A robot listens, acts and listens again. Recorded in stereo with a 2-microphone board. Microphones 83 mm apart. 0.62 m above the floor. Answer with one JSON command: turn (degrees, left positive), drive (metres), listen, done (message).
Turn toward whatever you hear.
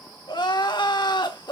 {"turn": 60}
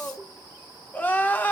{"turn": 25}
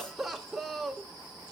{"done": "Facing the crying."}